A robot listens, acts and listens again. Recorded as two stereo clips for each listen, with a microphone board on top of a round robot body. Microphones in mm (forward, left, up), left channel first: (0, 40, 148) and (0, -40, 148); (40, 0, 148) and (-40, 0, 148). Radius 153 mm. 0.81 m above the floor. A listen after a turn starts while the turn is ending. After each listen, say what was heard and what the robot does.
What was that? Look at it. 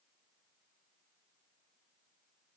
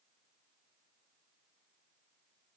Keep listening.
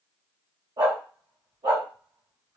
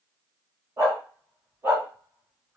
The dog barking: 115° right. Turn 115° right.
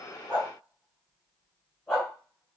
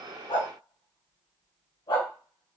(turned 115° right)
Found it: a dog barking, straight ahead, 2 to 4 m away.